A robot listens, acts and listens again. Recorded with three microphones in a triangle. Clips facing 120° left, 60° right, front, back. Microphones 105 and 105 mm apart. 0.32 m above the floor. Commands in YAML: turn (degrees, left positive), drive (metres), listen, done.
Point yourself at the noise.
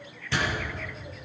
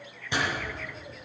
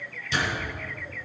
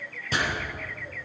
turn: -135
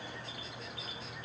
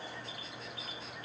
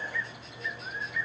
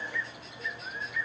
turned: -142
done: "I heard a door slam from this way, but can't make it out now."